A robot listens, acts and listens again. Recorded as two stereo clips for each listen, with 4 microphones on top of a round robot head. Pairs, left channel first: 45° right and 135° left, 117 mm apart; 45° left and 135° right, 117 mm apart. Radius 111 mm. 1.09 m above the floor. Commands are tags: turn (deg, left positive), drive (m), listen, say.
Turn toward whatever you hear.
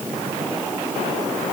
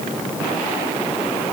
<listen/>
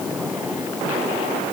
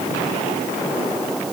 <listen/>
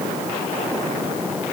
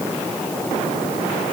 <say>I can't make out anything.</say>